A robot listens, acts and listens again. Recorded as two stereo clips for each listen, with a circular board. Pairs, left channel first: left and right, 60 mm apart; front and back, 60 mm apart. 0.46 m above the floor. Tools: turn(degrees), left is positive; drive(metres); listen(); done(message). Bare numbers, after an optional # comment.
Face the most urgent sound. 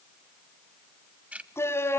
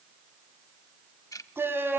# The shout: 130° left.
turn(130)
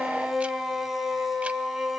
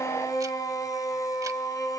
done("Facing the shout.")